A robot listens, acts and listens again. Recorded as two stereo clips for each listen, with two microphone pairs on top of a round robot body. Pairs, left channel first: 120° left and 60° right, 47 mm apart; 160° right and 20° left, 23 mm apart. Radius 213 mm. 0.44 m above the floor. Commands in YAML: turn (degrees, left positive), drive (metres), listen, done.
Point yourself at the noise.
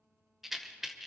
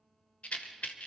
turn: -145
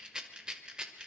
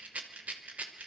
turn: 10
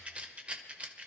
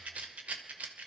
done: "Facing the rattle."